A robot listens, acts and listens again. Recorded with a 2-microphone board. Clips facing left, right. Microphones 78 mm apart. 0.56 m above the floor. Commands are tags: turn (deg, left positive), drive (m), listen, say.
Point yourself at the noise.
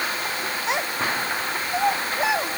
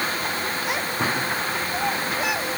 <turn deg="25"/>
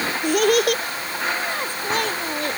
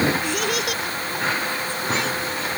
<turn deg="125"/>
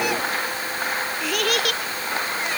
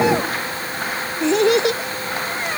<turn deg="-25"/>
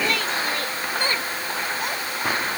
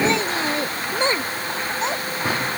<turn deg="-20"/>
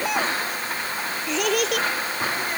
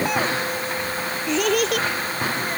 <say>Facing the child speaking.</say>